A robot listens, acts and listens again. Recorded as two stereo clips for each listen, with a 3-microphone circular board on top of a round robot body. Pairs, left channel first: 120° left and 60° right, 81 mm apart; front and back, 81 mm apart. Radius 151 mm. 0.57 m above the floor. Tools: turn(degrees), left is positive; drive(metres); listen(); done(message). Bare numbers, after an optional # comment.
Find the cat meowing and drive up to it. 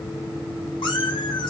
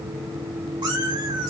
# The cat meowing: 150° left.
turn(150)
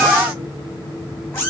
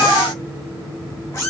# The cat meowing is now 55° left.
turn(55)
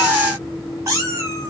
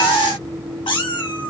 # The cat meowing is now 10° right.
turn(-10)
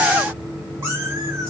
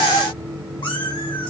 drive(1.0)
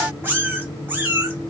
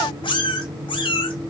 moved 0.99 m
drive(1.0)
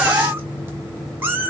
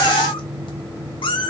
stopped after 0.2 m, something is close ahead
done("Arrived at the cat meowing, straight ahead.")